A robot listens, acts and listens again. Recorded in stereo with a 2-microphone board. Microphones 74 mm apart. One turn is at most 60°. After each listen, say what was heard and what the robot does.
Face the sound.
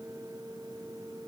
Keep listening.
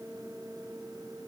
Keep listening.
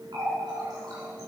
Turn 60° right.
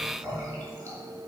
So it is at 40° right. Turn 40° right.
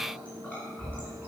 The running tap is now 15° left. Turn 15° left.
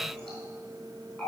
Facing the running tap, 2 to 4 m away.